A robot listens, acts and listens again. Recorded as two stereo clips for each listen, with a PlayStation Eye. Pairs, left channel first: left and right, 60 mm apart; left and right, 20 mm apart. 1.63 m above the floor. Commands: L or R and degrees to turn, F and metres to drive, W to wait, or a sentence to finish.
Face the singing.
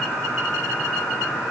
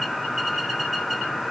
W
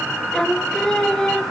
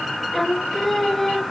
L30
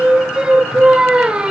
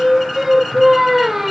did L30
R15
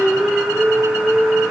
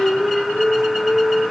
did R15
Found it: singing, straight ahead, 1 to 2 m away.